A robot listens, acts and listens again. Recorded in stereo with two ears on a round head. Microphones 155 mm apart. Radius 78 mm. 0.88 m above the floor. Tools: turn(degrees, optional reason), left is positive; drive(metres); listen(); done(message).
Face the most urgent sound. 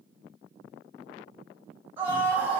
turn(degrees=-30)
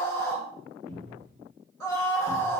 turn(degrees=15, reason="So it is at 15° left.")
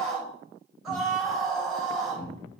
done("Facing the scream.")